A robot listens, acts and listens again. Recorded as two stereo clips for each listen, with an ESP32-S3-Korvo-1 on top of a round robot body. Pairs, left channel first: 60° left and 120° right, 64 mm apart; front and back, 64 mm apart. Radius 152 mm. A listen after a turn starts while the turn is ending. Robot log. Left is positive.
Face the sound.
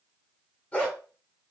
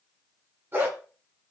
note: The dog barking: 130° left.
cmd yaw +130
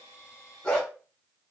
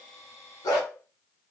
note: The dog barking is now 15° right.
cmd yaw -15
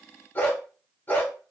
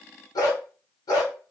end: Facing the dog barking.